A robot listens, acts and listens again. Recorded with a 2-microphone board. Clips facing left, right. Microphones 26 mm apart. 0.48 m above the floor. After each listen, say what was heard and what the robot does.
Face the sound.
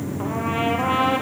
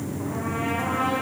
The trumpet: about 70° left or 110° left. Turn 70° left.
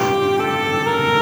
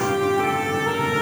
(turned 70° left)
So it is at 40° left. Turn 40° left.
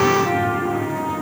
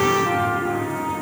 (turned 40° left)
Facing the trumpet, 2 to 4 m away.